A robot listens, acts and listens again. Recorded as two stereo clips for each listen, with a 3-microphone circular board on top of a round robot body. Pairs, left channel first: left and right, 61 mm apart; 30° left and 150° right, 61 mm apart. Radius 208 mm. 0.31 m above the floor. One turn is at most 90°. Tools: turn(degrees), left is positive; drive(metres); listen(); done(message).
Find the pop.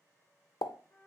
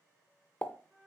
turn(degrees=90)
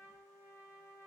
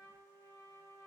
turn(degrees=10)
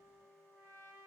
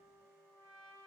done("Facing where the pop came from. I can't hear it now.")